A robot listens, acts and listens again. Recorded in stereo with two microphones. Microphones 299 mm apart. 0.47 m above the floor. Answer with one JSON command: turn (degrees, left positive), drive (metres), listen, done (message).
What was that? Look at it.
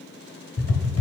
{"turn": 50}
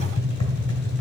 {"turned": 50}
{"turn": 70}
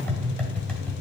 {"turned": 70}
{"done": "Found it: tapping, straight ahead, 1 to 2 m away."}